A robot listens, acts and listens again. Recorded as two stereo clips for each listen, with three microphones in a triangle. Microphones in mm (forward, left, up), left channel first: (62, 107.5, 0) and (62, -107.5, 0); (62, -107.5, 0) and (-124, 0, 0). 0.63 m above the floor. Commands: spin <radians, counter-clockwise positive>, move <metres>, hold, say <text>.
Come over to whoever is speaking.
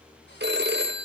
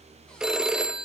hold
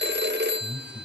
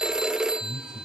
spin 0.44
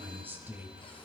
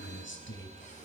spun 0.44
spin -0.17
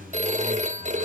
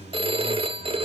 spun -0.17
move 1.0
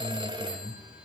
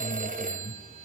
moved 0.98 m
move 1.0
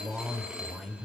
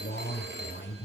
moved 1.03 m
move 1.0
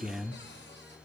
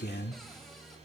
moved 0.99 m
move 1.0
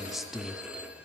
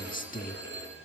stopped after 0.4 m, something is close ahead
say Arrived at the man speaking, straight ahead.